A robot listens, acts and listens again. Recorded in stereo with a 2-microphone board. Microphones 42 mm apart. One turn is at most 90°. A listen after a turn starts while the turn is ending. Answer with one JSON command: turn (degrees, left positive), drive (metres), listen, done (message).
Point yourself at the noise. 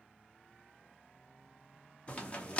{"turn": 30}
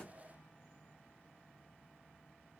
{"listen": true}
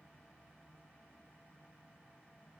{"done": "I heard a crack, but can't make it out now. It was about straight ahead or 120° left."}